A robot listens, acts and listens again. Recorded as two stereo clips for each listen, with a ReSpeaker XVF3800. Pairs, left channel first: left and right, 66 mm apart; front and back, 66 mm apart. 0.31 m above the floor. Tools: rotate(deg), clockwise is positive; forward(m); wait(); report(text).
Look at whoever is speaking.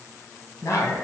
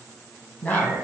rotate(-65)
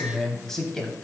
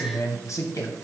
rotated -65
rotate(-10)
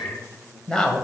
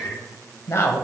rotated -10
rotate(-20)
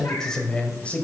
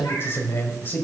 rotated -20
rotate(-40)
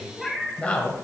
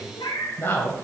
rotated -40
rotate(-35)
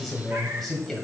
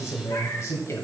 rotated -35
report("Found it: a man speaking, straight ahead.")